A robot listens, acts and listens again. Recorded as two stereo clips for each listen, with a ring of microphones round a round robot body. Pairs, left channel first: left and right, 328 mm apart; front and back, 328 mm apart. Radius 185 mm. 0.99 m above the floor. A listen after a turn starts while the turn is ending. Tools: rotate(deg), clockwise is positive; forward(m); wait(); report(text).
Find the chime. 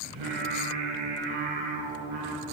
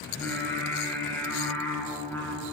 wait()
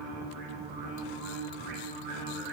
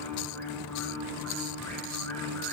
wait()
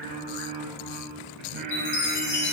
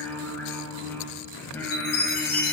rotate(-45)
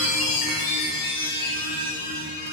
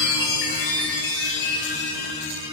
rotate(-25)
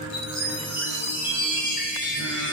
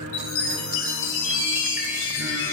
report("Found it: a chime, straight ahead.")